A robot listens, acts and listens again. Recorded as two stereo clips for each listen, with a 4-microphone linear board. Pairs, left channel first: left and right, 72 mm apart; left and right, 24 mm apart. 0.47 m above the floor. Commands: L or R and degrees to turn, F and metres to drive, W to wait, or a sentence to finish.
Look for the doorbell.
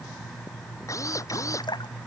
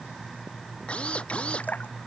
W
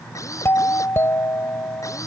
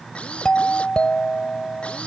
L35
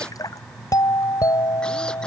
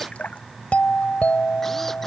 L105
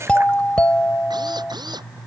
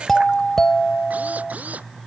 L20
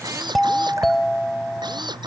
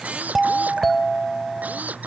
Found it: a doorbell, straight ahead.